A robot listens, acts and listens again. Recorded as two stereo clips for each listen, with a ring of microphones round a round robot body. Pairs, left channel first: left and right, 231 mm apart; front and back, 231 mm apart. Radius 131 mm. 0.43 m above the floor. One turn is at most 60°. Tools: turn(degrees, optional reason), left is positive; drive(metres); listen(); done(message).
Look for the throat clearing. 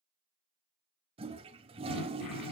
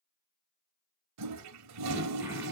turn(degrees=60, reason="The throat clearing: 100° left.")
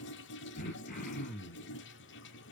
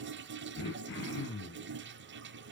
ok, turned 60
turn(degrees=35, reason="The throat clearing is now 35° left.")
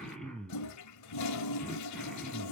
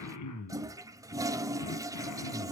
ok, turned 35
done("Facing the throat clearing.")